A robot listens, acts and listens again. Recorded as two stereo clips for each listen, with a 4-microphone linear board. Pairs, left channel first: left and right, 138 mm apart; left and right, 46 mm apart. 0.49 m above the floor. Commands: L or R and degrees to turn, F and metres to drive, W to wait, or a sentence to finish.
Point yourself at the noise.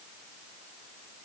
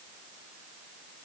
W
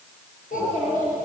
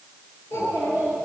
L70
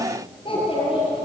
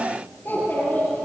L40
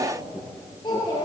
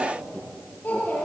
L30
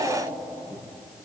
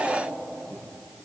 Facing the child speaking, over 4 m away.